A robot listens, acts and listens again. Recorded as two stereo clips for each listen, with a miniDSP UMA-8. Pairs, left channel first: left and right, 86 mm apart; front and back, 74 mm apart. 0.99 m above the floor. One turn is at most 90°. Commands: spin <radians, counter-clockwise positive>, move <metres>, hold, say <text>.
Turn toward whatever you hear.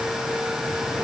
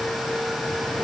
hold
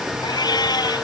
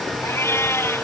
spin 0.96
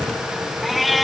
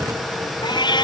say Facing the cat meowing.